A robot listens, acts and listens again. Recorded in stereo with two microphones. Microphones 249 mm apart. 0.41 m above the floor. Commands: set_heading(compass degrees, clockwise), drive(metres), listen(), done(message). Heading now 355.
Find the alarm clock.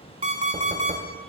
set_heading(25)
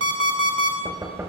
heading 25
set_heading(145)
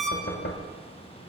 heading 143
done("Facing the alarm clock.")